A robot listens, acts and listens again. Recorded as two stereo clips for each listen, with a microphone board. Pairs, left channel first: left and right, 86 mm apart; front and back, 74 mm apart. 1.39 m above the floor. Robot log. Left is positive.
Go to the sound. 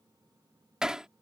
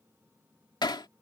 cmd fwd 1.0
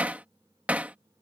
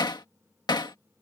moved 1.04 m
note: The hammering is now 15° right.
cmd yaw -15
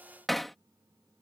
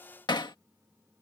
cmd fwd 1.0
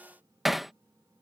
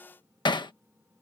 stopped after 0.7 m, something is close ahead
end: Arrived at the hammering, straight ahead.